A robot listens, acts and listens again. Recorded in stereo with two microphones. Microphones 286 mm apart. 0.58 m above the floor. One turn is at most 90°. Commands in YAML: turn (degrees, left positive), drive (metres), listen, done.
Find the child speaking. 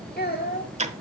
turn: 35
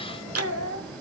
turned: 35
turn: 90
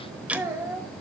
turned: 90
turn: -10
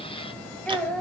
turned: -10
done: "Found it: a child speaking, straight ahead, 2 to 4 m away."